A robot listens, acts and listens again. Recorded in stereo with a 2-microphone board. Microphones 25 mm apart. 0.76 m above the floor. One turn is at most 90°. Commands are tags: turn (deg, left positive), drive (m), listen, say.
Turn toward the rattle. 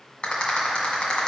<turn deg="40"/>
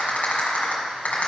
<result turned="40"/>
<turn deg="90"/>
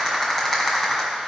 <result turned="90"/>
<turn deg="15"/>
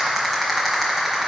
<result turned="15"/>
<say>Facing the rattle.</say>